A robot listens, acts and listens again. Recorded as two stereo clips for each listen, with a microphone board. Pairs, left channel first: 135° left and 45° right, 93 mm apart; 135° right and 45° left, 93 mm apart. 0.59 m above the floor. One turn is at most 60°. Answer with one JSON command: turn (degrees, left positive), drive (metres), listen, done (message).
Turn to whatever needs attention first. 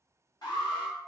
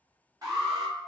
{"turn": 60}
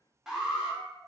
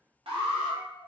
{"turn": 40}
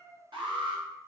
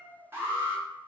{"turn": -20}
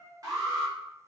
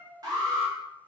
{"done": "Found it: an alarm, straight ahead, under 1 m away."}